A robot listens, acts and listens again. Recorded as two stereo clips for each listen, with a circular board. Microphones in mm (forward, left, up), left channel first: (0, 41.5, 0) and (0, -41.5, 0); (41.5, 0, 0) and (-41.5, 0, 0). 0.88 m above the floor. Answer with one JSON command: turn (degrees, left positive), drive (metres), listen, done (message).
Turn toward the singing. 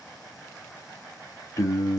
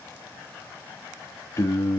{"turn": 40}
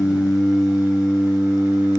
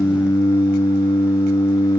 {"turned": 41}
{"turn": -30}
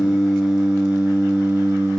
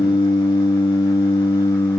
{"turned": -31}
{"turn": -35}
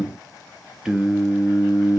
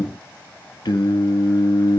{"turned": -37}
{"turn": -10}
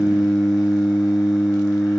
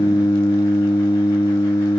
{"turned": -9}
{"done": "Facing the singing."}